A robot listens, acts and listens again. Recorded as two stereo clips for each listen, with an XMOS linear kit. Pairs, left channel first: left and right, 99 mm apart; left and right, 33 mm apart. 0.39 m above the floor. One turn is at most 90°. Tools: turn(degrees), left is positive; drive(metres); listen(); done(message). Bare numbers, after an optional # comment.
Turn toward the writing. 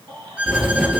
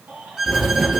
turn(-30)
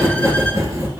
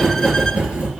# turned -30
# So it is at 145° right.
turn(-90)
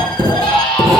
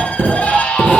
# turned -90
# The writing is now 35° right.
turn(-35)
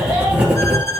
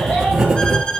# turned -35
# The writing is now 10° right.
turn(-10)
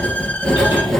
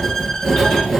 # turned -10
done("Facing the writing, 2 to 4 m away.")